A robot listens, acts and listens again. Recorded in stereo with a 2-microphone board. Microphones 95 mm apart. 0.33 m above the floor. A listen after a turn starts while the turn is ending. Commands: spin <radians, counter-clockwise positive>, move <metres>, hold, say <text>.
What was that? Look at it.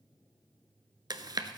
spin -0.79
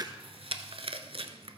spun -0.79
spin -1.57
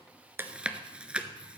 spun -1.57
spin -0.17
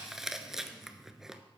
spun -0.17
say Found it: chewing, straight ahead, under 1 m away.